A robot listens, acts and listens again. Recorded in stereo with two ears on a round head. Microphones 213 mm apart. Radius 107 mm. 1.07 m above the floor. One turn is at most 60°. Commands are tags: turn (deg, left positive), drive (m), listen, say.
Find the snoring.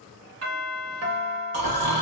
<turn deg="-60"/>
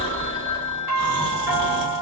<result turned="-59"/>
<turn deg="-50"/>
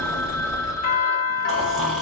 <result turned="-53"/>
<say>Found it: snoring, straight ahead.</say>